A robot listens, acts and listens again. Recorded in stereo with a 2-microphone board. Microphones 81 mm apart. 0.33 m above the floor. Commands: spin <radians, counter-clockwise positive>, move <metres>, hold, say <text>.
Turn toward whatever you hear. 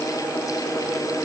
hold
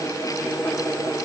hold
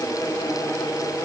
say I can't make out anything.